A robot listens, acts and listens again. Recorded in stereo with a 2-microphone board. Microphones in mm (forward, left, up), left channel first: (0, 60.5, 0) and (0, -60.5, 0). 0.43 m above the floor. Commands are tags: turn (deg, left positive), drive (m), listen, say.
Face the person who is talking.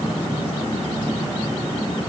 <listen/>
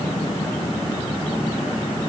<listen/>
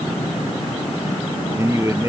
<turn deg="-25"/>
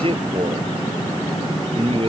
<turn deg="-130"/>
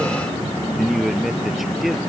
<say>Facing the man speaking.</say>